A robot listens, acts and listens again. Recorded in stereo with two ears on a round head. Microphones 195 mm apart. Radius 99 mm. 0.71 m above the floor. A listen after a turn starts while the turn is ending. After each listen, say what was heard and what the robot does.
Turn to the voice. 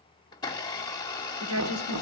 The woman speaking: about 75° right or 105° right. Turn 75° right.
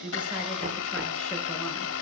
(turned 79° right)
Keep listening.
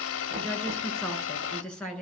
Facing the woman speaking.